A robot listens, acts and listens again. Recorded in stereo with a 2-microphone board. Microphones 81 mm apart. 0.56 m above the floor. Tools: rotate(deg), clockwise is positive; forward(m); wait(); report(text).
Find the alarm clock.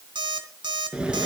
rotate(65)
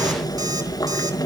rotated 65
wait()
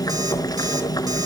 wait()
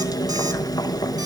report("I heard an alarm clock, but can't make it out now. It was about straight ahead or 50° right.")